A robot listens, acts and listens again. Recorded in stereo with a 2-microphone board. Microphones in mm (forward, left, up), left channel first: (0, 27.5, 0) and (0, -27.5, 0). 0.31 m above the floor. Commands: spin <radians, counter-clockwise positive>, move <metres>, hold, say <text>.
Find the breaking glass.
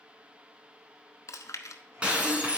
spin -0.35
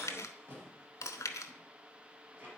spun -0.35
hold
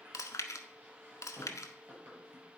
say I heard breaking glass, but can't make it out now. It was about straight ahead or 140° right.